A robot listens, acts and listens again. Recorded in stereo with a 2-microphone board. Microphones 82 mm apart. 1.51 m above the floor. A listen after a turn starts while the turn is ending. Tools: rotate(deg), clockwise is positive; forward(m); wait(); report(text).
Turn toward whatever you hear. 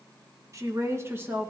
rotate(25)
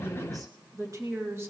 rotate(30)
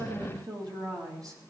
rotate(135)
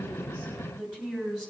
rotate(-15)
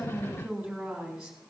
report("Found it: a woman speaking, straight ahead.")